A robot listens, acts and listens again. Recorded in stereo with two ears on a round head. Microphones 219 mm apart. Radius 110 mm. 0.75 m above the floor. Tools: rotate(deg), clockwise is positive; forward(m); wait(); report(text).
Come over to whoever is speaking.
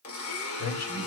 rotate(-70)
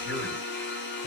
wait()
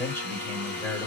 rotate(-10)
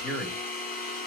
forward(1.0)
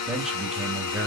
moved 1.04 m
forward(1.0)
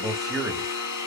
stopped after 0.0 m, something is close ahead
report("I am next to the man speaking.")